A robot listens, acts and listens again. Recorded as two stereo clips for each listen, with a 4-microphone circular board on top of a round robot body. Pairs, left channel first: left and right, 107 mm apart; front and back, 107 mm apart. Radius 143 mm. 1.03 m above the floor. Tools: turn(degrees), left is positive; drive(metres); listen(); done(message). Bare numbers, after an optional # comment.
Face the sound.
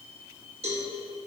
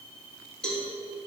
# The cowbell: 85° right.
turn(-85)
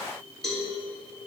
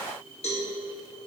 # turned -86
done("Facing the cowbell, 2 to 4 m away.")